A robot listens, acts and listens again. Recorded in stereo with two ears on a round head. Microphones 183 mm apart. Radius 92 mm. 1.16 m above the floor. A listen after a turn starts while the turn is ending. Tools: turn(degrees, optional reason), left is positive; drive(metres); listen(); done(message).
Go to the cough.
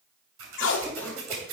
turn(degrees=30)
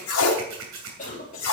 turn(degrees=140, reason="So it is at 140° left.")
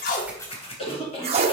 turn(degrees=30, reason="The cough is now 30° left.")
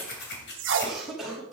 drive(metres=1.0)
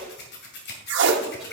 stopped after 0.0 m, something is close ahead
listen()
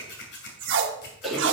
done("Something is in my way. I am facing the cough but have not reached it.")